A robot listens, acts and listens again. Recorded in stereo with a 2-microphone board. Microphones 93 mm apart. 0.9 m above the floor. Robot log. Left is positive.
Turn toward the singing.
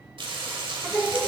note: The singing: about 15° right or 165° right.
cmd yaw -15
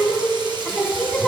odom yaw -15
cmd yaw +30
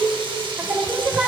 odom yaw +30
note: So it is at 20° right.
cmd yaw -20
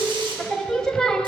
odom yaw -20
note: The singing is now 10° left.
cmd yaw +10
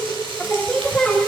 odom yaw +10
note: The singing is now 10° left.
cmd yaw +10
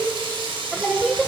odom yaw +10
end: Found it: singing, straight ahead, 1 to 2 m away.